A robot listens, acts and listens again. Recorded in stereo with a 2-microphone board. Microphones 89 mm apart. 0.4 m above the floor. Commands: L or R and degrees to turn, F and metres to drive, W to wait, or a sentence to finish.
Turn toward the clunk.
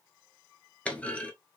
L30
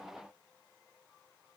W
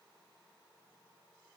I heard a clunk, but can't make it out now. It was about 15° right or 135° left.